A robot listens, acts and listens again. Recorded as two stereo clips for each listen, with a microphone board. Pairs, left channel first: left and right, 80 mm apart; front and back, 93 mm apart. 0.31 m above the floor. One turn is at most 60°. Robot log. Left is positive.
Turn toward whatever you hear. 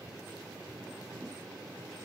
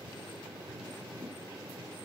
cmd idle
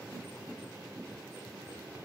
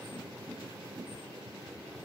cmd idle
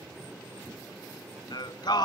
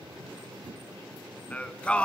note: The singing: 75° left.
cmd yaw +60
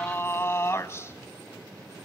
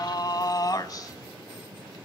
note: The singing is now 40° left.
cmd yaw +40
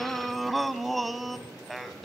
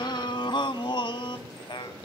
end: Found it: singing, straight ahead.